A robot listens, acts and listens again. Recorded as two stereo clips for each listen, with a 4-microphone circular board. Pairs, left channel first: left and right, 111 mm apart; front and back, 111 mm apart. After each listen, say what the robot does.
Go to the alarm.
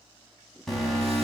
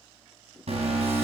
Turn 175° left.
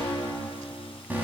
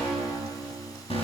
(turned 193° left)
Turn 15° right.
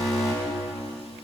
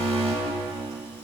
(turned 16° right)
Drive 1.0 m forward.
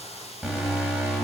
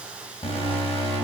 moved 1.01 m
Turn 10° right.
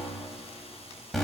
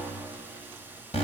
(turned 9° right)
Drive 1.0 m forward.
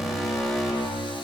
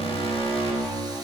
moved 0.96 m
Drive 1.0 m forward.
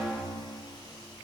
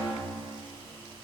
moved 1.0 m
Turn 10° right.
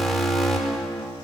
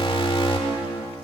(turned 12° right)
Drive 1.0 m forward.
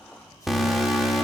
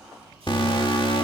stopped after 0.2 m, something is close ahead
I am next to the alarm.